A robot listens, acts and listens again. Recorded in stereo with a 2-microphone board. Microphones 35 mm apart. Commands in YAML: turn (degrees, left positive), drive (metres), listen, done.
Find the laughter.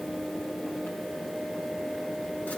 listen: true
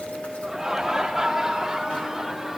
turn: -30
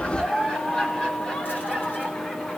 turn: 30
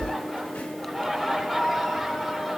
done: "Facing the laughter."